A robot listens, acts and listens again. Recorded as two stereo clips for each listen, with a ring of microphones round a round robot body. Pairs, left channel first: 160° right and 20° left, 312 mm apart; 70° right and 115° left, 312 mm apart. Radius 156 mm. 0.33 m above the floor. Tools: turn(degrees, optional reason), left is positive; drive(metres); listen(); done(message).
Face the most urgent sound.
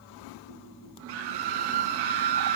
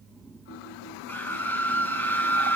turn(degrees=15, reason="The scream: 15° left.")
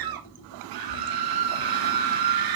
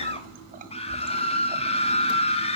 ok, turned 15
done("Found it: a scream, straight ahead, 2 to 4 m away.")